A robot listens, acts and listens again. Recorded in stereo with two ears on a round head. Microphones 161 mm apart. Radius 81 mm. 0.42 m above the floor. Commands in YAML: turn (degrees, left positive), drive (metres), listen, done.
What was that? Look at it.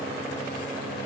listen: true
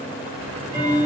turn: -25
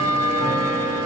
done: "Facing the ticking, 1 to 2 m away."